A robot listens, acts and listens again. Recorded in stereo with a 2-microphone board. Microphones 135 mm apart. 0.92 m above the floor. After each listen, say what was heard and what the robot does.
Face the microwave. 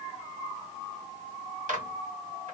Turn 90° right.
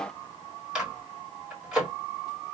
Facing the microwave, 1 to 2 m away.